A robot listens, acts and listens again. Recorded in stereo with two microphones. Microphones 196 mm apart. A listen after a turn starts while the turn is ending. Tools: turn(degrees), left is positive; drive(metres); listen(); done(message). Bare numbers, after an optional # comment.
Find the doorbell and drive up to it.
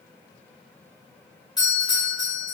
# The doorbell: about 20° left or 160° left.
turn(20)
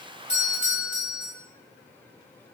# So it is at 135° left.
turn(135)
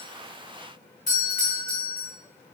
# The doorbell is now 55° left.
turn(55)
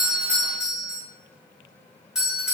drive(1.0)
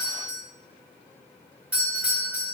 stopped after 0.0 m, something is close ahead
# The doorbell is now 10° right.
turn(-10)
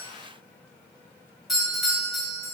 done("Blocked. The doorbell is further on, straight ahead.")